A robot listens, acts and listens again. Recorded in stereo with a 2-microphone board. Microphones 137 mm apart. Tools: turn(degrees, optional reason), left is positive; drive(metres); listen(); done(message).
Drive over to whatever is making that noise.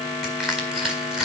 turn(degrees=-30)
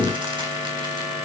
listen()
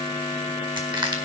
turn(degrees=-145, reason="So it is at 145° right.")
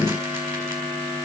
listen()
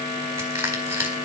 turn(degrees=-20, reason="The crushing is now 20° right.")
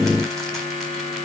listen()
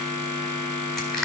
drive(metres=1.0)
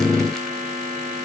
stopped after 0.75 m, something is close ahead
listen()
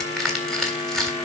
done("Something is in my way. I am facing the crushing but have not reached it.")